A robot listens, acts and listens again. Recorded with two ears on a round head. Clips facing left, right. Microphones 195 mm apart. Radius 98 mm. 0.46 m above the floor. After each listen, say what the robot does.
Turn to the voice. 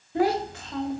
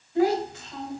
Turn 55° left.
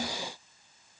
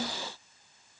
Keep listening.
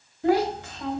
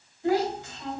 Turn 60° left.
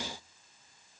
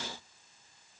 Keep listening.
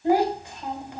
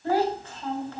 Turn 15° left.
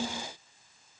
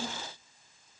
Found it: a child speaking, straight ahead, 2 to 4 m away.